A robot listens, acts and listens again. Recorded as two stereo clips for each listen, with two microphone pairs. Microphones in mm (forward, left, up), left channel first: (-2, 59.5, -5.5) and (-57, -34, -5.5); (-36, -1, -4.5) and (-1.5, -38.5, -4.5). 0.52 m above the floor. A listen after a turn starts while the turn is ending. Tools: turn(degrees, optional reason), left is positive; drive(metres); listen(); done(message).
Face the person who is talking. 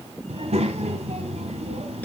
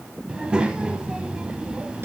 turn(degrees=-120, reason="The child speaking: 120° right.")
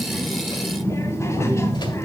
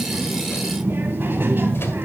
done("Facing the child speaking.")